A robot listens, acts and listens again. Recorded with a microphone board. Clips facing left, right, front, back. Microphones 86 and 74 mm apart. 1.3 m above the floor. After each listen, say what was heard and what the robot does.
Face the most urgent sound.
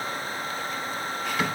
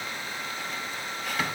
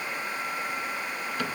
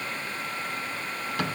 Keep listening.
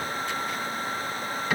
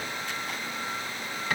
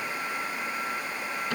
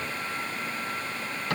Keep listening.
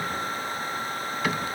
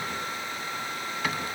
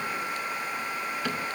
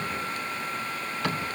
I can't make out anything urgent to turn to.